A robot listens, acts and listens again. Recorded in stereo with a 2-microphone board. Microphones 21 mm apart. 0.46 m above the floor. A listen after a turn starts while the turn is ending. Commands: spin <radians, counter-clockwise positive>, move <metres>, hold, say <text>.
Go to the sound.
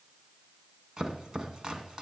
spin -0.79
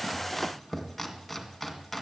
move 1.0
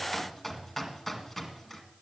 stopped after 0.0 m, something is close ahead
say Something is in my way. I am facing the chopping but have not reached it.